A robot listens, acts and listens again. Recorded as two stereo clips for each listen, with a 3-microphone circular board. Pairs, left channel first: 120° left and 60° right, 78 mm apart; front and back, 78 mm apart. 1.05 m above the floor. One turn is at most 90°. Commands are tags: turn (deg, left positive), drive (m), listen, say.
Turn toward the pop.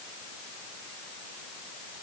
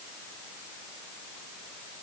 <listen/>
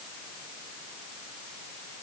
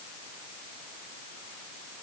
<listen/>
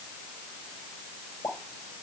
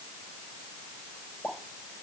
<turn deg="70"/>
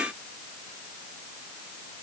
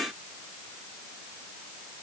<say>Facing where the pop came from. I can't hear it now.</say>